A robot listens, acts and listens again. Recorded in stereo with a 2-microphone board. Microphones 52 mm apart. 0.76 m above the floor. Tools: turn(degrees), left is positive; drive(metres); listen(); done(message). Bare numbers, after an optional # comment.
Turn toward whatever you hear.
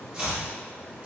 # The chopping: about 20° right or 160° right.
turn(-20)
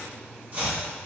# So it is at 135° right.
turn(-135)
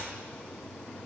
listen()
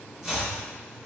# The chopping is now 15° right.
turn(-15)
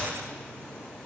listen()
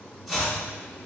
done("Found it: chopping, straight ahead, 1 to 2 m away.")